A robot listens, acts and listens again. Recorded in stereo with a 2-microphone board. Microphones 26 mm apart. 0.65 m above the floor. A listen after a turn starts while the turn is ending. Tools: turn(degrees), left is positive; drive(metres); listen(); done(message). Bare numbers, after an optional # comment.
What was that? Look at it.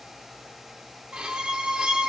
# The violin: about 45° right or 135° right.
turn(-45)
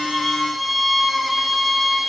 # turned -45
done("Found it: a violin, straight ahead.")